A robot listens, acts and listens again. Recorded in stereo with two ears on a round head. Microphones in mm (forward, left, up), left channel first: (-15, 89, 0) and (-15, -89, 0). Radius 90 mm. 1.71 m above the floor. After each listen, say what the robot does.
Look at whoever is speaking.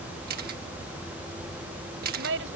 Turn 90° right.
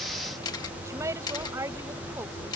Turn 15° right.
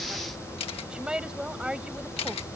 Found it: a woman speaking, straight ahead.